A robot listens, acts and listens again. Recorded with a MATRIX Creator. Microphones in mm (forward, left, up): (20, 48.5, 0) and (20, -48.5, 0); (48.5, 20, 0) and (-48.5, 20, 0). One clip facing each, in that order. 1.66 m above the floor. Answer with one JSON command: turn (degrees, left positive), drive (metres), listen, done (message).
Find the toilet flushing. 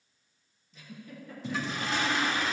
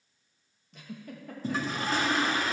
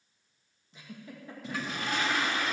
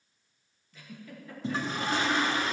{"turn": -130}
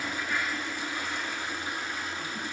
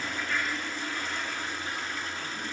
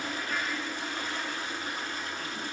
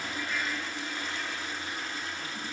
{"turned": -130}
{"turn": 15}
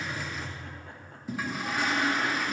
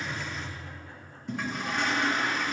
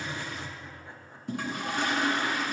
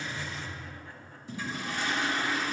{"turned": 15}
{"done": "Found it: a toilet flushing, straight ahead."}